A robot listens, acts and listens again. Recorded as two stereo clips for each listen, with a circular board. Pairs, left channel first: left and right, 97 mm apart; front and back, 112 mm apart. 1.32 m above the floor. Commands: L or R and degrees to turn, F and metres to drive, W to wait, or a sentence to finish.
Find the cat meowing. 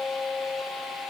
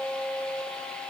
W
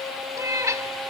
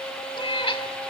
R35
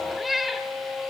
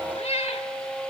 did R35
Facing the cat meowing.